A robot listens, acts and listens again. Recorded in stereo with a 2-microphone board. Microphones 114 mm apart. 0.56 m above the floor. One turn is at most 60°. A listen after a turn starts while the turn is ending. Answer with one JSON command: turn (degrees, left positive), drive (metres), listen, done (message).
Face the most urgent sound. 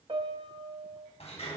{"listen": true}
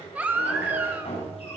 {"turn": -30}
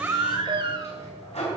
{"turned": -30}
{"turn": -60}
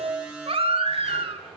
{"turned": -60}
{"turn": -55}
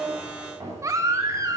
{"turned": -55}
{"turn": -30}
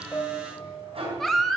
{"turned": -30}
{"done": "Found it: a baby crying, straight ahead."}